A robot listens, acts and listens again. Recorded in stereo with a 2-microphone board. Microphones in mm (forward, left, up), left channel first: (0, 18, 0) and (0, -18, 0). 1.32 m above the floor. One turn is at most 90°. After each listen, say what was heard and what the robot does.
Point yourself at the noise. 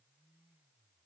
Keep listening.
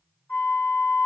The flute: about 60° left or 120° left. Turn 60° left.
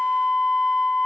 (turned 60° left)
So it is at 60° left. Turn 60° left.
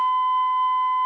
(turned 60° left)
Found it: a flute, straight ahead, 1 to 2 m away.